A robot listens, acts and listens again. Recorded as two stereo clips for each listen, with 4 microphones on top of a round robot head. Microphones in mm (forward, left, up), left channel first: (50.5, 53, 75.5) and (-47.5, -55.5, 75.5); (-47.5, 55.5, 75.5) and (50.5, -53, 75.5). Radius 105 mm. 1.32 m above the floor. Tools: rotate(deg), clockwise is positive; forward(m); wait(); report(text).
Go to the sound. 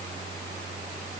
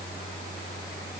wait()
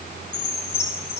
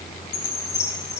rotate(-85)
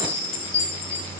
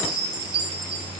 forward(1.0)
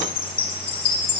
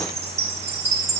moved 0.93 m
forward(1.0)
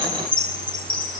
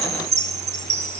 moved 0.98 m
forward(1.0)
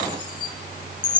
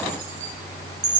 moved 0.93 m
rotate(10)
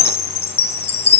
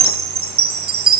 forward(1.0)
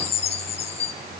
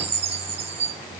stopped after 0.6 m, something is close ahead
report("Arrived at the chime, straight ahead.")